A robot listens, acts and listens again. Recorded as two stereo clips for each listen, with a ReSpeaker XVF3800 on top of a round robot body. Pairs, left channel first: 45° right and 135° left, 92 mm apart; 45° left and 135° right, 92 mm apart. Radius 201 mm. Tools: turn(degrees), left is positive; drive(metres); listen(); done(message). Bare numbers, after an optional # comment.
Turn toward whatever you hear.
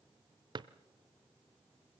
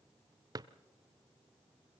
# The drawer: 175° left.
turn(175)
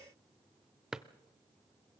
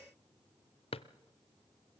# The drawer is now 50° left.
turn(50)
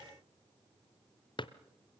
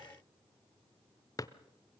done("Found it: a drawer, straight ahead.")